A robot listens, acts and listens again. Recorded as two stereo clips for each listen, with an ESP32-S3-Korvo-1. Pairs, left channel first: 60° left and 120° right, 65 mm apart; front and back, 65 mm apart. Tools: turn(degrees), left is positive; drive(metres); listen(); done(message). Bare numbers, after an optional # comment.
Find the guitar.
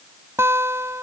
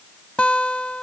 # The guitar: 70° right.
turn(-70)
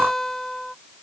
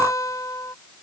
# The guitar is now 25° right.
turn(-25)
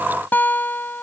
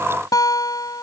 done("Facing the guitar.")